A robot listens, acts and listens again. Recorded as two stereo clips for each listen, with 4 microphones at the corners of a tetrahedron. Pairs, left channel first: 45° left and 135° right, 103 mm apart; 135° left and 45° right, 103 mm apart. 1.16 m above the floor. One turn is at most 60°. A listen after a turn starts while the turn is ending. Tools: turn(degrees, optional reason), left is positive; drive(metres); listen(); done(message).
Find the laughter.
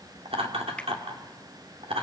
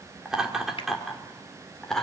turn(degrees=-60, reason="The laughter: 140° right.")
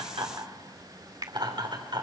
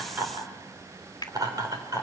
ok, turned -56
turn(degrees=-60, reason="The laughter is now 95° right.")
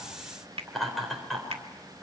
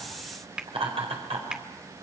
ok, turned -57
turn(degrees=-45, reason="The laughter is now 45° right.")
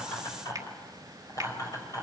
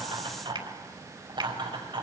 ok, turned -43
turn(degrees=-10, reason="The laughter is now 10° right.")
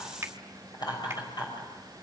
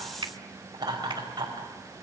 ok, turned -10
done("Facing the laughter, over 4 m away.")